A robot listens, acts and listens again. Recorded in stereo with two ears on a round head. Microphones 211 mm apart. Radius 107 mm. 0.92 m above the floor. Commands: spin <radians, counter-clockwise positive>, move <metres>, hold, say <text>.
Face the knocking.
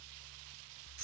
hold
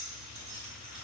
hold
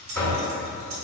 spin 0.52
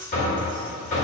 spin 2.53
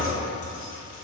say Facing the knocking.